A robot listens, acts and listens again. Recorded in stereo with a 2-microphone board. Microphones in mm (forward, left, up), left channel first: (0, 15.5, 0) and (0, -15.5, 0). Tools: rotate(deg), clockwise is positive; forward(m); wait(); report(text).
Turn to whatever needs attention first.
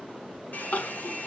rotate(-65)
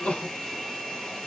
rotate(-45)
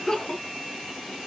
rotate(-25)
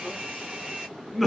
report("Found it: crying, straight ahead, 1 to 2 m away.")